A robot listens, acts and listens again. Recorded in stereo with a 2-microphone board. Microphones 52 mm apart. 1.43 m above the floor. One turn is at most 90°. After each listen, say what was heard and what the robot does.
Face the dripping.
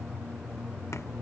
Keep listening.
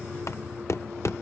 Keep listening.
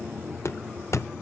I can't make out dripping, only knocking.